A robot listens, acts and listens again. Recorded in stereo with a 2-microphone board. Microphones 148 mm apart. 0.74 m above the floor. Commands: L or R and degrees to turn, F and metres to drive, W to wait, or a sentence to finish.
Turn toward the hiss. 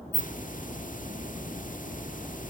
L60
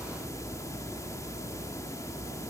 L25
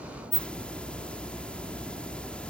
L10
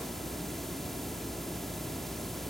Facing the hiss.